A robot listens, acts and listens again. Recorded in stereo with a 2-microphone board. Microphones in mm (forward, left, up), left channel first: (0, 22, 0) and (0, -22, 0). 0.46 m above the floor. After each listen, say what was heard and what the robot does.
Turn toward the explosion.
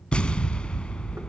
The explosion: about 20° left or 160° left. Turn 20° left.
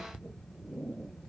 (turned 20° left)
Keep listening.
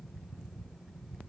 I heard an explosion, but can't make it out now. It was about straight ahead or 140° left.